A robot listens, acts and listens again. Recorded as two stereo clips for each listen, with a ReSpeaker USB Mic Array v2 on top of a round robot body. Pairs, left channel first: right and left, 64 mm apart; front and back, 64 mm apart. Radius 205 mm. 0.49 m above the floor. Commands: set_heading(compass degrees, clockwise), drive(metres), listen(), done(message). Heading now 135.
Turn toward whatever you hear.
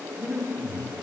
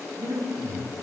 set_heading(340)
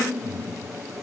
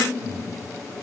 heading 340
set_heading(325)
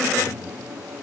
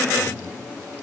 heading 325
done("Found it: breathing, straight ahead.")